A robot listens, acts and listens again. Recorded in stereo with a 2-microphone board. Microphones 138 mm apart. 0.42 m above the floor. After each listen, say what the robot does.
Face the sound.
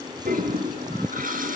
Turn 70° right.
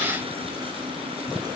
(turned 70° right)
Keep listening.
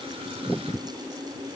Turn 40° right.
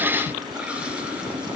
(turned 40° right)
Turn 10° right.
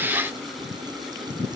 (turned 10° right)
Keep listening.
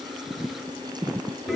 Found it: a toilet flushing, straight ahead.